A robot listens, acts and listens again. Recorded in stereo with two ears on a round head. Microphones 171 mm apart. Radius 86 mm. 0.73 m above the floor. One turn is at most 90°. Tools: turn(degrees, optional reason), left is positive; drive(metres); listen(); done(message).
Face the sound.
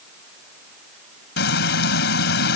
turn(degrees=60, reason="The frying: about 60° left or 120° left.")
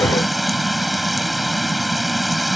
done("Found it: frying, straight ahead.")